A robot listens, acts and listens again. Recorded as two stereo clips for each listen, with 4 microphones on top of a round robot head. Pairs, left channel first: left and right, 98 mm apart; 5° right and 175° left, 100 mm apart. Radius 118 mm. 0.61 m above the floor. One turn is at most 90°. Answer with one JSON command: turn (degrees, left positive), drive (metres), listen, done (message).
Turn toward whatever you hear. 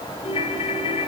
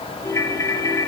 {"turn": 55}
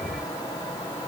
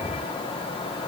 {"listen": true}
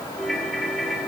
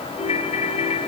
{"done": "Found it: a ringtone, straight ahead."}